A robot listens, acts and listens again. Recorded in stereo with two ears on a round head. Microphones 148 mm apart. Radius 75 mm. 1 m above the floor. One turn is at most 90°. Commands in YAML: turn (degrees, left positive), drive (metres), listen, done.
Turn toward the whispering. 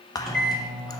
turn: 20
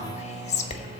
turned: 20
turn: 90
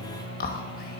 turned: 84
turn: 55
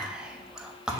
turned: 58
done: "Facing the whispering."